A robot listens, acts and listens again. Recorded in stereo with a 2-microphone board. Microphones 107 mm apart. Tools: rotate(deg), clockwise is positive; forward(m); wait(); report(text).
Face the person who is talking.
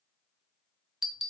wait()
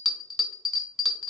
wait()
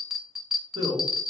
rotate(55)
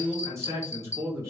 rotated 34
rotate(30)
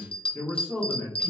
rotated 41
rotate(-10)
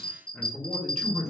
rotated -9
report("Facing the man speaking, 2 to 4 m away.")